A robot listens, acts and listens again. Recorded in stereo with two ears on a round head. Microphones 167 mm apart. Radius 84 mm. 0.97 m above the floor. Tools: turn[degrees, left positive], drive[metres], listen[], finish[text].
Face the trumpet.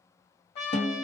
Thought: The trumpet: about 35° left or 145° left.
Action: turn[35]
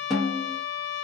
Thought: So it is at 95° left.
Action: turn[95]
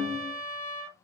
Thought: The trumpet is now 15° left.
Action: turn[15]
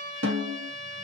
Action: finish[Facing the trumpet, 1 to 2 m away.]